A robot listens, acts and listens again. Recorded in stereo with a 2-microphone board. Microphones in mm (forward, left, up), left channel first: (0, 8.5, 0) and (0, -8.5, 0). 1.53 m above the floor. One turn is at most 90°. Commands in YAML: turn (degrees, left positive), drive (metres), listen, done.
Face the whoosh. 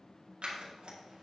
listen: true
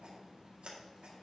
listen: true
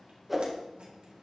turn: -30
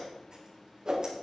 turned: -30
turn: -90
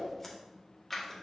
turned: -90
turn: -55
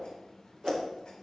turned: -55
turn: -40
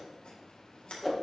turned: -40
done: "Facing the whoosh, 1 to 2 m away."